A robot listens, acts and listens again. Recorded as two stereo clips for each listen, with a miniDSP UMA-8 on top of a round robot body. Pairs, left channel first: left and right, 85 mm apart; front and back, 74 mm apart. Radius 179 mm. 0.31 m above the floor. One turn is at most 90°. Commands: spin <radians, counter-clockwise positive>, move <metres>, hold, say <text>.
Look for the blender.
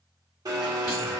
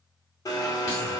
spin -0.70
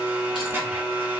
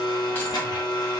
spin -0.44
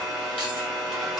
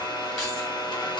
say Facing the blender.